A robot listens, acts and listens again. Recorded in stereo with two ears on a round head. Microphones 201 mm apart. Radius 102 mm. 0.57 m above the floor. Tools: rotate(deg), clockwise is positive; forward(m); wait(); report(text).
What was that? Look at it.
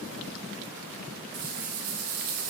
rotate(90)
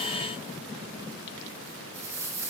rotate(15)
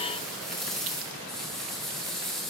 report("Facing the rattle.")